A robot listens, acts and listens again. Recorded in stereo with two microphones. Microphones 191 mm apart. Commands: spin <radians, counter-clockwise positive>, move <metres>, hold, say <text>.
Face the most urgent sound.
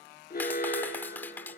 spin 0.87
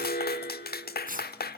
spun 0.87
spin 1.22
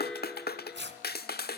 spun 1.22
say Found it: an alarm, straight ahead, 2 to 4 m away.